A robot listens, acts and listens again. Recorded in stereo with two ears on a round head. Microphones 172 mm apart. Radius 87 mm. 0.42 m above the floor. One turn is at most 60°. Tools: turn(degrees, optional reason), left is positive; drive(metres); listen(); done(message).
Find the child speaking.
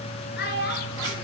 turn(degrees=60, reason="The child speaking: about 60° left or 120° left.")
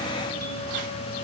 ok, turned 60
listen()
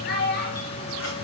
turn(degrees=50, reason="So it is at 50° left.")
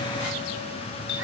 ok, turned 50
listen()
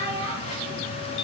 turn(degrees=-15, reason="The child speaking is now 15° right.")
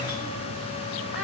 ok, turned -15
listen()
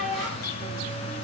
done("Facing the child speaking, over 4 m away.")